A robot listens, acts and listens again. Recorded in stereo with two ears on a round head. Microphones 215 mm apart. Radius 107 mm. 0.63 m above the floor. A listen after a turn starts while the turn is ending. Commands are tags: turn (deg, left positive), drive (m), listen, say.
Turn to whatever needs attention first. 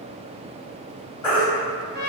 <turn deg="20"/>
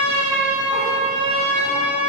<listen/>
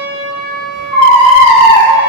<turn deg="140"/>
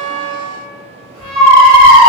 <turn deg="-55"/>
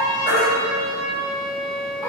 <listen/>
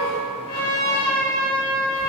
<listen/>
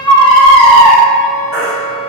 <say>Facing the baby crying.</say>